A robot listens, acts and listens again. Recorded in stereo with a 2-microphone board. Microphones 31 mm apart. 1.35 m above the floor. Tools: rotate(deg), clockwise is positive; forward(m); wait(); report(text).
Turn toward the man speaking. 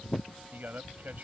rotate(65)
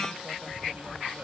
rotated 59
wait()
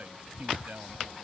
rotate(60)
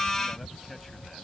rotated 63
wait()
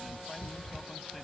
wait()
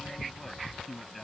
report("Facing the man speaking.")